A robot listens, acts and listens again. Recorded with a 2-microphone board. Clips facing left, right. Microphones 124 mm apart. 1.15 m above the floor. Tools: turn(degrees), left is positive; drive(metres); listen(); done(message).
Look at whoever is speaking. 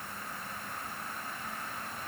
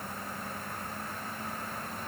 listen()
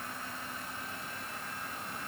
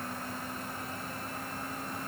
listen()
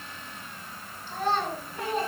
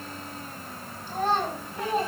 turn(degrees=-45)
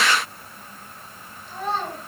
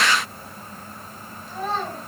done("Facing the child speaking.")